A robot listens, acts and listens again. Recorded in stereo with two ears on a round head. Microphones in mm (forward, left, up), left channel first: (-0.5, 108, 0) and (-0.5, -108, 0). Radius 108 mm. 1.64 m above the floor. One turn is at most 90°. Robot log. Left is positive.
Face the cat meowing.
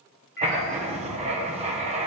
note: The cat meowing: about 40° left or 140° left.
cmd yaw +40
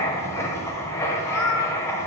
note: So it is at 95° left.
cmd yaw +90
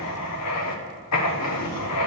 cmd idle
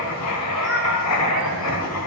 end: Facing the cat meowing, 2 to 4 m away.